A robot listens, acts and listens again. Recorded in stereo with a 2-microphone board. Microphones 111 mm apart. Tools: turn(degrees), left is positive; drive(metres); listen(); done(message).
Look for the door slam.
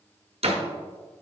turn(degrees=-70)
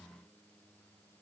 listen()
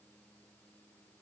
done("I heard a door slam, but can't make it out now. It was about straight ahead or 40° right.")